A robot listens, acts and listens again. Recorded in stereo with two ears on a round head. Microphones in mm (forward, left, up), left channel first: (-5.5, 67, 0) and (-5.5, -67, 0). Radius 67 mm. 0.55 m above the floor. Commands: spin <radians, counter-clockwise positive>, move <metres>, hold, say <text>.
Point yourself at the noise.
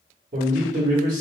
spin -0.87
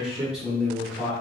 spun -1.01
say Found it: a man speaking, straight ahead.